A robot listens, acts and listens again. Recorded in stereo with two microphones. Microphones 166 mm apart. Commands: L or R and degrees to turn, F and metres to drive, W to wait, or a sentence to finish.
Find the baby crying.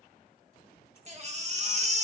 R45
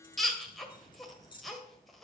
Found it: a baby crying, straight ahead, 1 to 2 m away.